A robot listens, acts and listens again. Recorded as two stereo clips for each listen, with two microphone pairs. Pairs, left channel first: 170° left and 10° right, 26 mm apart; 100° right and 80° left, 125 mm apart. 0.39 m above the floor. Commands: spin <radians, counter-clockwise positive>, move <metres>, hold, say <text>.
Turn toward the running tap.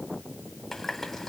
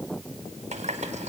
spin 1.57
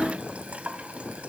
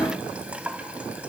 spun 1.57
say Found it: a running tap, straight ahead, 1 to 2 m away.